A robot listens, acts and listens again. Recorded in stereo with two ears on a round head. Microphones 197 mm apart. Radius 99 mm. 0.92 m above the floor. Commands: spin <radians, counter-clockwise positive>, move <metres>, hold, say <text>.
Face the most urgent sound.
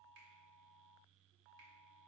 hold
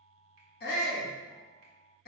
spin 0.70
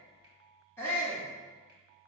spin 0.26
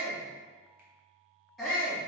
say Found it: a shout, straight ahead, 1 to 2 m away.